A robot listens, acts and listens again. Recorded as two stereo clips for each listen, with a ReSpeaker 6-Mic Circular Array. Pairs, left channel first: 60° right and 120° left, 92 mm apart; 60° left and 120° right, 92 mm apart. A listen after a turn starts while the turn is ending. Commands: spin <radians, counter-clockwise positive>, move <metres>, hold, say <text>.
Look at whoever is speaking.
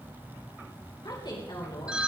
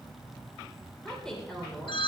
spin -0.44
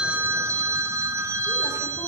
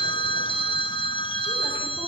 hold
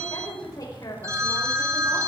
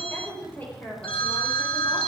spin -0.17
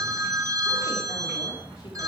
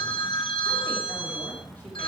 hold
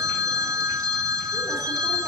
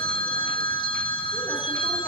hold
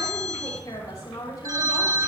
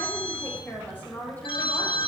spin -0.17
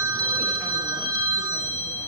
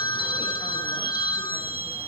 hold
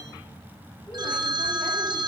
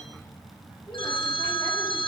hold
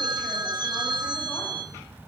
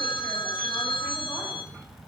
say I heard a woman speaking from this way, but can't make it out now.